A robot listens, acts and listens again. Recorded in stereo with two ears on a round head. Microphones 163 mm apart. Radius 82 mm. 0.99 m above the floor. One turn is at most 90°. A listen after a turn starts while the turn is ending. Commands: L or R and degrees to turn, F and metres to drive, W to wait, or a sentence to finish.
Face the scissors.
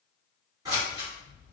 R20
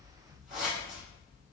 Facing the scissors, 1 to 2 m away.